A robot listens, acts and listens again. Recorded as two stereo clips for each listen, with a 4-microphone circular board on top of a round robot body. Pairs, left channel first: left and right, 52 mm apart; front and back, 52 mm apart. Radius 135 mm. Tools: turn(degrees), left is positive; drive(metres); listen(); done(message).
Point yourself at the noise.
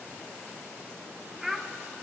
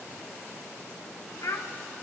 done("Found it: a child speaking, straight ahead.")